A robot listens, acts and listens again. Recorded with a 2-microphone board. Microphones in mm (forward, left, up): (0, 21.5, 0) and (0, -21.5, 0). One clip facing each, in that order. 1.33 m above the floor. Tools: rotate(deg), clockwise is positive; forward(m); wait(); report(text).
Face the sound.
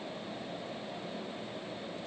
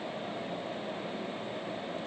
wait()
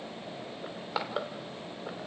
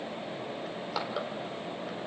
rotate(-20)
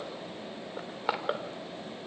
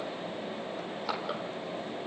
rotate(-140)
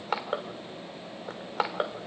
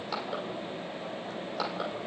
rotate(-50)
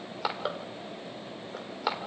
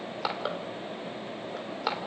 report("Found it: crushing, straight ahead.")